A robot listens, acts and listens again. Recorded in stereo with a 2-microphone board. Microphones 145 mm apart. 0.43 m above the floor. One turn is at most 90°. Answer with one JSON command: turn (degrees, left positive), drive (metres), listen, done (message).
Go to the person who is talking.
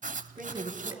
{"turn": -70}
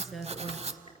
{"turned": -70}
{"drive": 1.0}
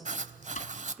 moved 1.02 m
{"drive": 1.0}
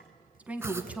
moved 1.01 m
{"turn": -10}
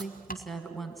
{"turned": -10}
{"drive": 1.0}
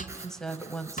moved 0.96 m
{"drive": 1.0}
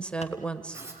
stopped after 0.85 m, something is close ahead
{"turn": 10}
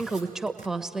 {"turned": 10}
{"done": "I am next to the woman speaking."}